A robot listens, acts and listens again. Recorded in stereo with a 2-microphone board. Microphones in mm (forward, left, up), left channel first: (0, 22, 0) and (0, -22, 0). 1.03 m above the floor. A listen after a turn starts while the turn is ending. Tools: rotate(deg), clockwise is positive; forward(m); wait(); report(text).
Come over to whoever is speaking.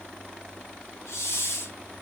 wait()
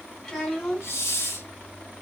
rotate(-20)
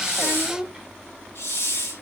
forward(1.0)
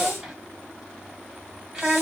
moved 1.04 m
forward(1.0)
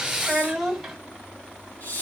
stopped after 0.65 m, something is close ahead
report("Arrived at the child speaking, straight ahead.")